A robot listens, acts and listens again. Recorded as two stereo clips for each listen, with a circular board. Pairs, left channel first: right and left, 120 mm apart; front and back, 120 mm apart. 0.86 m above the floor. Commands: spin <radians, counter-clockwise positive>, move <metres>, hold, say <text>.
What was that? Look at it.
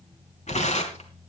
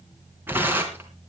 spin -1.83
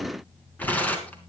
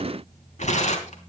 spin -0.26
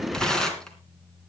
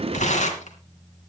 say Found it: tearing paper, straight ahead, 2 to 4 m away.